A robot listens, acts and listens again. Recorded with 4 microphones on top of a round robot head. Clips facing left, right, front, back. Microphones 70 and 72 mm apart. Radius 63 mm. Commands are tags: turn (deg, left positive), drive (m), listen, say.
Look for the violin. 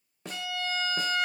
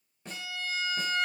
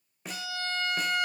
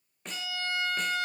<turn deg="35"/>
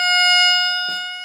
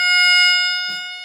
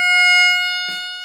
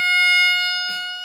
<turn deg="15"/>
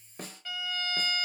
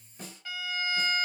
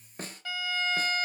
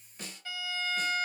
<say>Found it: a violin, straight ahead.</say>